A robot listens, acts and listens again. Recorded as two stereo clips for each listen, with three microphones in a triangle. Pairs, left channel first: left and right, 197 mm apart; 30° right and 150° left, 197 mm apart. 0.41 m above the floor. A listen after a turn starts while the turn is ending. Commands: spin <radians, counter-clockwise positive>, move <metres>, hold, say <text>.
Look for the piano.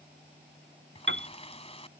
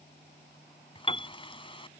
spin -1.57
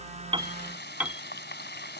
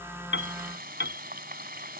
say Facing the piano.